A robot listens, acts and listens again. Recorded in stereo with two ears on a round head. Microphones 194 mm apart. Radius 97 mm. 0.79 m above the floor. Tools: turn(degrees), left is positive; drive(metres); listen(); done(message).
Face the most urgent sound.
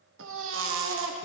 turn(degrees=-65)
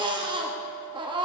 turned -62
turn(degrees=-25)
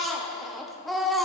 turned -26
done("Found it: a baby crying, straight ahead.")